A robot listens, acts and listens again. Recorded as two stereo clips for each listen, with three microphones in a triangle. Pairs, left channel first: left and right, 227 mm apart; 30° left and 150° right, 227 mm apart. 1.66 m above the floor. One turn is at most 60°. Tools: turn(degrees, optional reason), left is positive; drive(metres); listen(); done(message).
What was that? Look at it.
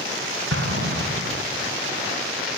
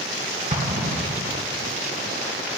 turn(degrees=-60, reason="The explosion: 95° right.")
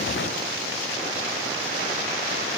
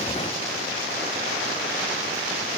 turn(degrees=-35, reason="Nothing new. It was at 35° right.")
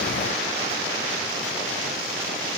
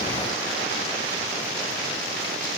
done("I heard an explosion from this way, but can't make it out now.")